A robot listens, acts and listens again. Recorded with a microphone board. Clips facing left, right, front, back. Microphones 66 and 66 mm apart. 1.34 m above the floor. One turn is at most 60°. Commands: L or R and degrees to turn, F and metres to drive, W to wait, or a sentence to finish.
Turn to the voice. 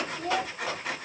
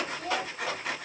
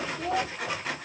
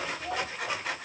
L30
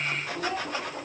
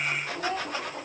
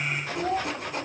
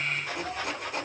Found it: a child speaking, straight ahead, 2 to 4 m away.